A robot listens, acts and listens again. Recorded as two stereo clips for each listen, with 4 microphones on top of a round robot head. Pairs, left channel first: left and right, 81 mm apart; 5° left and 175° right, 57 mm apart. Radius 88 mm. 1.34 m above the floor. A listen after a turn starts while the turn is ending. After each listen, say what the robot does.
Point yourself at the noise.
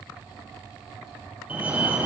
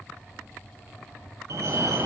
Turn 160° right.
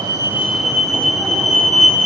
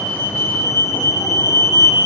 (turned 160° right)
Found it: a fire alarm, straight ahead.